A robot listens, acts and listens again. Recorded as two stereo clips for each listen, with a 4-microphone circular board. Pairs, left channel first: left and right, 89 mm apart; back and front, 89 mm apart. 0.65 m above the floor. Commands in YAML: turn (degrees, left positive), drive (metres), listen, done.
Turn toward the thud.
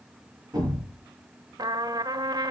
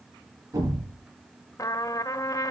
turn: -50
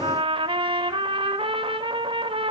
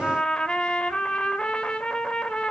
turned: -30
turn: -20
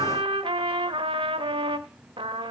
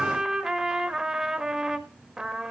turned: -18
done: "I heard a thud from this way, but can't make it out now."